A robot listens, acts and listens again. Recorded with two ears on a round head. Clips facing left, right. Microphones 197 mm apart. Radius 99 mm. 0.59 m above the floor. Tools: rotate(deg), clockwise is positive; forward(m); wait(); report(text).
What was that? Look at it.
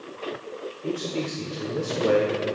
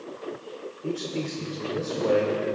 rotate(-20)
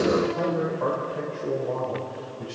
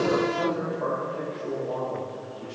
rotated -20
rotate(-105)
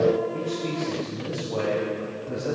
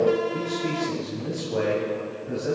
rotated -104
rotate(15)
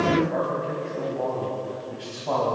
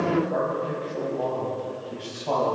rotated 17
report("Found it: a man speaking, straight ahead, 2 to 4 m away.")